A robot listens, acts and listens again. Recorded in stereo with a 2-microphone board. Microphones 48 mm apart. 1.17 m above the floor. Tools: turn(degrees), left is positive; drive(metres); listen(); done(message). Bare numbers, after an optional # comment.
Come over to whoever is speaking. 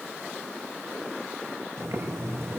listen()
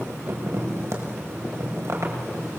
listen()
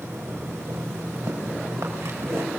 done("I can't make out anyone speaking, only boiling.")